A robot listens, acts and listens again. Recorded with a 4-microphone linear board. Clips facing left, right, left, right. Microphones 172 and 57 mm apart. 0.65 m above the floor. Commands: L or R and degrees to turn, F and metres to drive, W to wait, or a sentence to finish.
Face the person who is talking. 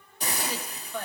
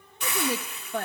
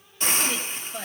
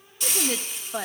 R55
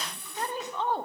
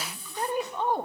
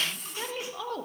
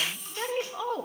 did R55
R15
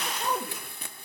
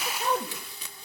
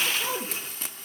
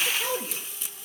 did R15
Found it: a woman speaking, straight ahead, 1 to 2 m away.